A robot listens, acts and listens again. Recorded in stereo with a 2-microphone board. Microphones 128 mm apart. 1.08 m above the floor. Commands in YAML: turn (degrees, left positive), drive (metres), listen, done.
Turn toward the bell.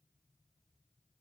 listen: true
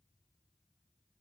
listen: true
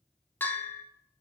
turn: 30
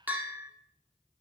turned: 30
turn: -15
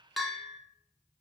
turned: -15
done: "Found it: a bell, straight ahead, 1 to 2 m away."